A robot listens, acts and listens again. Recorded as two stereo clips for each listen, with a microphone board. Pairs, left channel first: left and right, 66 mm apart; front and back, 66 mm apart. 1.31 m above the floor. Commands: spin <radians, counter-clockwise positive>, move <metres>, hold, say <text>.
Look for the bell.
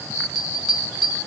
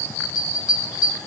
say Found it: a bell, straight ahead, 2 to 4 m away.